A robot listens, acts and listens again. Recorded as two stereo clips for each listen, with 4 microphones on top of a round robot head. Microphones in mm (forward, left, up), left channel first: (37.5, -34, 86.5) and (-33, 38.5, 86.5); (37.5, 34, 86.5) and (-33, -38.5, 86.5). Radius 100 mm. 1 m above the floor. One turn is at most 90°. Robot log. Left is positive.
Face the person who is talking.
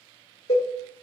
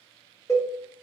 cmd idle
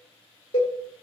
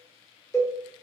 cmd idle
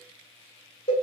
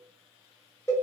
end: I can't make out anyone speaking to turn to.